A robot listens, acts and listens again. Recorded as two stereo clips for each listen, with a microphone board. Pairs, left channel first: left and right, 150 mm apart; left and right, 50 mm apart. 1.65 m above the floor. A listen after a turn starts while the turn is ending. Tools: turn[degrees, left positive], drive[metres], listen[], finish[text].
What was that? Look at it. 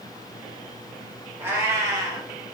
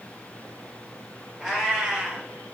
Thought: The cat meowing: about 25° right or 155° right.
Action: turn[-25]
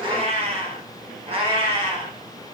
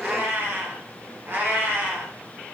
Thought: The cat meowing: about 35° right or 145° right.
Action: turn[-35]
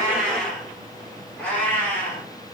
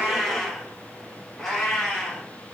Thought: So it is at 15° left.
Action: turn[15]
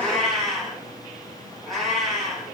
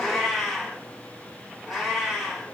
Action: finish[Found it: a cat meowing, straight ahead.]